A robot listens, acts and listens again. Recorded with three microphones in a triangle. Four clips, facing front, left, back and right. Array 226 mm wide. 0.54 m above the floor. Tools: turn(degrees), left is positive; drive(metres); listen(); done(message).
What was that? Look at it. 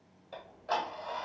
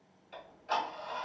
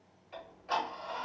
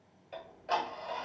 turn(degrees=-55)
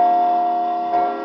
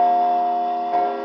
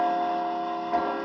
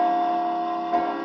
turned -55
done("Found it: ticking, straight ahead, 1 to 2 m away.")